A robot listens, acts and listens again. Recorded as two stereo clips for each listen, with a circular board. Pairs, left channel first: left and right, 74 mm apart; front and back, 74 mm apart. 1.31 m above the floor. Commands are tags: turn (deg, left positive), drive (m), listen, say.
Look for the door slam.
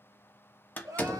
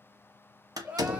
<turn deg="155"/>
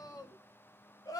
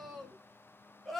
<say>I heard a door slam from this way, but can't make it out now.</say>